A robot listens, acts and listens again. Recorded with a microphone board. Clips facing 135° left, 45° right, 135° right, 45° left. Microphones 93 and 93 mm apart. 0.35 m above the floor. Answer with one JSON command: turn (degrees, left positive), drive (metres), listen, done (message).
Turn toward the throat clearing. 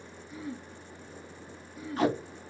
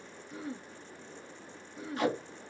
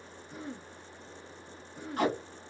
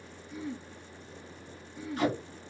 {"turn": -95}
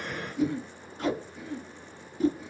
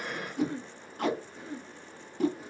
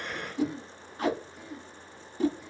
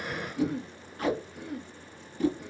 {"turn": 15}
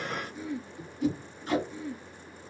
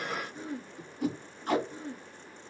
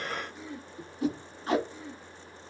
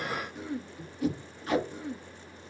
{"done": "Found it: throat clearing, straight ahead, 1 to 2 m away."}